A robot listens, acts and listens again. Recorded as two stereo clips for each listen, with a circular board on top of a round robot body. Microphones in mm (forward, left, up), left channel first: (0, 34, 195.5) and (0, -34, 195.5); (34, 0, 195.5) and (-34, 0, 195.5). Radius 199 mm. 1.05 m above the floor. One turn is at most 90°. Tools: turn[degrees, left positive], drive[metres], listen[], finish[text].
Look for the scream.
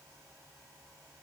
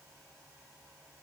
Action: listen[]
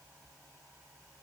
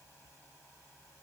Action: listen[]
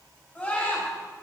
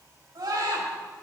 Thought: The scream: 160° left.
Action: turn[90]
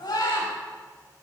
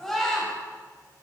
Thought: The scream is now 85° left.
Action: turn[85]
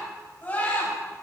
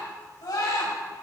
Thought: The scream is now 25° left.
Action: turn[25]
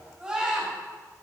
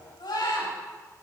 Thought: The scream is now 10° right.
Action: turn[-10]
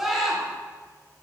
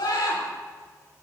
Action: finish[Found it: a scream, straight ahead.]